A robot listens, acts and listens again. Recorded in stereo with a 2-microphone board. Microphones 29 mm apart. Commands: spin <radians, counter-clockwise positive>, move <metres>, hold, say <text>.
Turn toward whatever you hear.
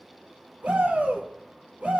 spin -1.13
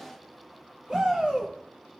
spin -0.61
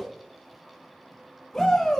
spin 0.26
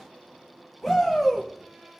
say Found it: a shout, straight ahead, 2 to 4 m away.